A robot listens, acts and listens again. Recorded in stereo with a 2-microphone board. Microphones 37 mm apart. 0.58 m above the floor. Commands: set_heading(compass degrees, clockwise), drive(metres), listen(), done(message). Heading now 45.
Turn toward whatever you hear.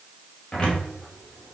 set_heading(15)
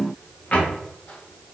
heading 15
set_heading(255)
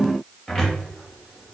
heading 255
done("Facing the cupboard door.")